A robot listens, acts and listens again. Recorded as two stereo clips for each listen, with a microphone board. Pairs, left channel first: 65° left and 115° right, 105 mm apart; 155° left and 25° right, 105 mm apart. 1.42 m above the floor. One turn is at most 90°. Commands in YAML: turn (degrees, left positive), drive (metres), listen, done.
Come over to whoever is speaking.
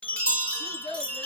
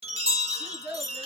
turn: 50
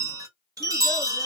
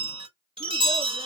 listen: true
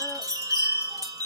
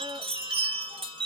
listen: true
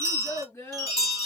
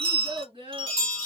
drive: 1.0
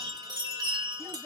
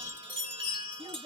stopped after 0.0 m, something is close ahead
done: "Something is in my way. I am facing the child speaking but have not reached it."